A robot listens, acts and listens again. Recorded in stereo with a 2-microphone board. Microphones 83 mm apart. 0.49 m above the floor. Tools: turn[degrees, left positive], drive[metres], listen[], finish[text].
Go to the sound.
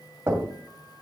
Thought: The knocking: about 30° right or 150° right.
Action: turn[-30]
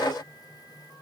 Action: listen[]
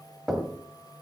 Action: drive[1.0]
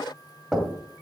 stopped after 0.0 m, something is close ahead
Action: finish[Something is in my way. I am facing the knocking but have not reached it.]